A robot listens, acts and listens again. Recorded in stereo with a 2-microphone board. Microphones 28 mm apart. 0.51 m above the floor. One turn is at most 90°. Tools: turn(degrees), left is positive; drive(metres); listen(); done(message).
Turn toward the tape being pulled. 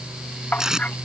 turn(degrees=-25)
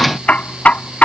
listen()
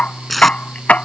done("Found it: tape being pulled, straight ahead.")